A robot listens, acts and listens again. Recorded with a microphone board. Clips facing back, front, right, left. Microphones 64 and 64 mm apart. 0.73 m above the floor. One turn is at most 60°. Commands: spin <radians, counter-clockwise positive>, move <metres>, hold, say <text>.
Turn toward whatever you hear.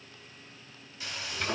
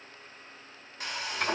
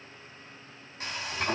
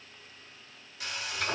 spin -0.61
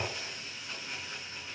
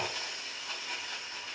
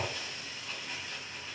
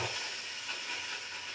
spin 0.17
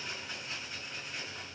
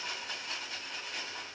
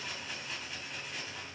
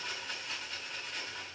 say Facing the frying.